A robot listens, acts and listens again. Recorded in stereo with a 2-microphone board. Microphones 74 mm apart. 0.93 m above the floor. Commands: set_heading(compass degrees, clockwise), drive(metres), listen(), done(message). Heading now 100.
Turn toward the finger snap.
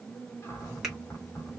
set_heading(130)
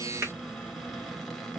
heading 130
set_heading(275)
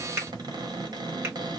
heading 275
set_heading(305)
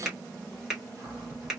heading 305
done("Found it: a finger snap, straight ahead.")